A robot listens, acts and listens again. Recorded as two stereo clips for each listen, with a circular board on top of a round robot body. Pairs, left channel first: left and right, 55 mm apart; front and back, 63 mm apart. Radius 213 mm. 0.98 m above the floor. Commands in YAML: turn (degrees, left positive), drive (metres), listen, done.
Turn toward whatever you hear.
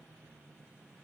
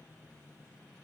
listen: true
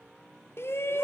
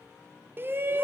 turn: 130
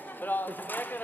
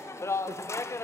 turn: 40
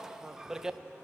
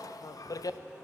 turn: -10
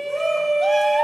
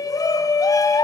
done: "Found it: a shout, straight ahead."